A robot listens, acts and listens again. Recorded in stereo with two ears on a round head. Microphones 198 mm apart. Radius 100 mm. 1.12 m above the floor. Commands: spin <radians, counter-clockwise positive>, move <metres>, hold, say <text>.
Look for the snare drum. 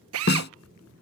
spin 0.87
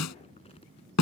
spin 1.40
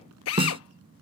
spin -0.44
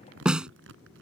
say Facing the snare drum.